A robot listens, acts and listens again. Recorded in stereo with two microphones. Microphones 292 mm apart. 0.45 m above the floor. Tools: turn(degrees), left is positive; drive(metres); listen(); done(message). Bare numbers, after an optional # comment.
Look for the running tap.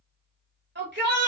listen()
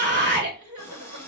turn(30)
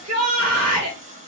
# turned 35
# So it is at 25° right.
turn(-25)
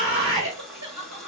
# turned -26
done("Found it: a running tap, straight ahead, 1 to 2 m away.")